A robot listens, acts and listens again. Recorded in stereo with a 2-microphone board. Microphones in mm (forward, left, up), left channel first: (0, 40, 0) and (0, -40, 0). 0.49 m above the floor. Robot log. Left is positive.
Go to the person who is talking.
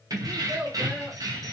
note: The child speaking: about 15° right or 165° right.
cmd yaw -15
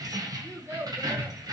note: So it is at 150° right.
cmd yaw -150
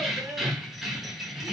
cmd idle
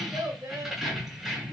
note: The child speaking is now 50° right.
cmd yaw -50
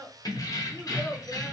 note: The child speaking is now 15° left.
cmd yaw +15
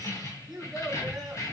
cmd fwd 1.0
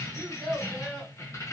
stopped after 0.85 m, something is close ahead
end: Arrived at the child speaking, straight ahead.